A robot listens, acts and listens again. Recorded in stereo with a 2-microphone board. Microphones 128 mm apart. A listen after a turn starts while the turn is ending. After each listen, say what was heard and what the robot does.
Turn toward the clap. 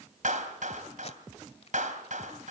Turn 90° right.
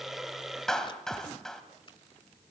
Found it: a clap, straight ahead, 2 to 4 m away.